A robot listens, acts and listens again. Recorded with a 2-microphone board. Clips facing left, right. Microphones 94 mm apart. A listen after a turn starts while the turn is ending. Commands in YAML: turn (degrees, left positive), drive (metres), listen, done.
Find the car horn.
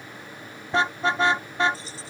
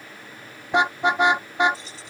turn: -15
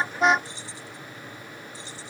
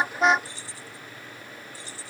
done: "Facing the car horn."